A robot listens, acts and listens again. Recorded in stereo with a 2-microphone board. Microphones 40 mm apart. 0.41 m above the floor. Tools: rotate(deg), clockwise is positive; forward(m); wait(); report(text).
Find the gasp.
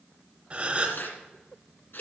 rotate(30)
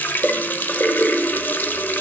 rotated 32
wait()
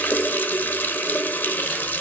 report("I heard a gasp, but can't make it out now. It was about straight ahead or 115° right.")